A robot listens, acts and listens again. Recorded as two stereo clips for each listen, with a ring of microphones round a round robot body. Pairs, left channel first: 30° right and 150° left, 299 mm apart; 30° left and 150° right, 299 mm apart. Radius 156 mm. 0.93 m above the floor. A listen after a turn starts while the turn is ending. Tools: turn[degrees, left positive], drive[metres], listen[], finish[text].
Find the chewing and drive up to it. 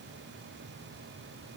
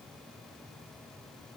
Action: listen[]
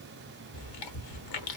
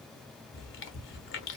Thought: The chewing: 25° right.
Action: turn[-25]
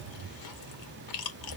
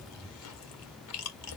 Thought: The chewing is now 15° right.
Action: turn[-15]
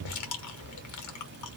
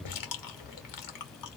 Action: drive[1.0]
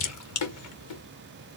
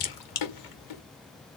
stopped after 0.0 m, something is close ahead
Thought: The chewing is now 10° left.
Action: turn[10]
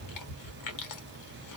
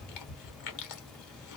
Action: finish[Blocked. The chewing is further on, straight ahead.]